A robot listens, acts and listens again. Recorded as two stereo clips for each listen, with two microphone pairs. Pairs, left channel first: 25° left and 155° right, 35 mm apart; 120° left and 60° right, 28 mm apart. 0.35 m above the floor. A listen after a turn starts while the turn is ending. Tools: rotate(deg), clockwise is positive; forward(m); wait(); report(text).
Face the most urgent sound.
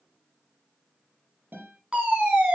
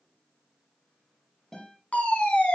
rotate(-145)
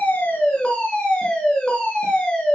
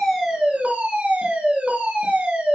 rotate(40)
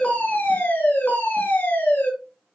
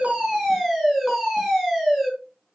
rotate(-15)
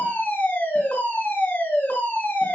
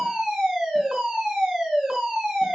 report("Found it: a fire alarm, straight ahead, over 4 m away.")